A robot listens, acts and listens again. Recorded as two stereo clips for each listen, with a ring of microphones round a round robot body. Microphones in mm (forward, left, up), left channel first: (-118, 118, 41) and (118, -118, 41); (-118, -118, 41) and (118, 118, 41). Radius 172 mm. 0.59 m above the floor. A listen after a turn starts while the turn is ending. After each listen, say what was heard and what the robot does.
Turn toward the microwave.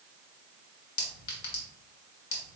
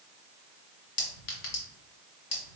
Keep listening.
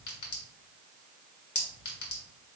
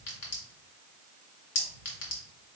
Keep listening.
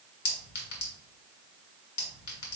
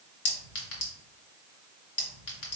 I can't make out a microwave to turn to.